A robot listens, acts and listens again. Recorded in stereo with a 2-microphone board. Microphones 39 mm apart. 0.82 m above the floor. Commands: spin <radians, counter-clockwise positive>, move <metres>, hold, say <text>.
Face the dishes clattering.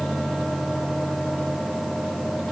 hold
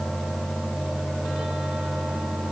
hold
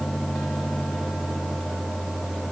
say I can't make out dishes clattering.